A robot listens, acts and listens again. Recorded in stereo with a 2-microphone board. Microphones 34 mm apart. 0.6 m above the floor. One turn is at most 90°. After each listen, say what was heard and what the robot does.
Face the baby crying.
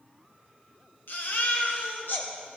Turn 90° left.
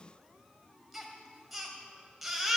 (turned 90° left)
Facing the baby crying.